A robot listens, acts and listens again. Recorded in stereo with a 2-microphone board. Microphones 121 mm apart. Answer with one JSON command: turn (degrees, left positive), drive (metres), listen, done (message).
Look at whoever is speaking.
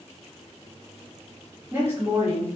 {"turn": -20}
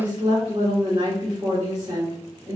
{"turn": -140}
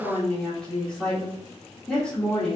{"turn": 10}
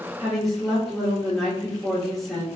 {"done": "Found it: a woman speaking, straight ahead, 1 to 2 m away."}